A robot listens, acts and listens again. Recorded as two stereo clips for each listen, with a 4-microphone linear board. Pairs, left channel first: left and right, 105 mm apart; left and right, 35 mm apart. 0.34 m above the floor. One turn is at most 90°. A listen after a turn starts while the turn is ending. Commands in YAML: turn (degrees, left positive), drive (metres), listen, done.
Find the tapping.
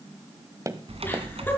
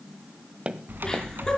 turn: -35
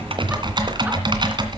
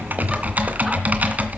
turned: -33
listen: true
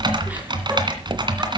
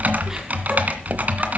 listen: true
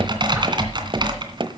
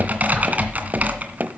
turn: -90
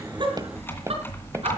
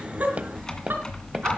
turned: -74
turn: -35
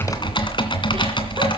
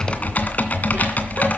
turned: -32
listen: true
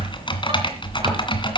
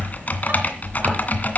done: "I heard tapping from this way, but can't make it out now."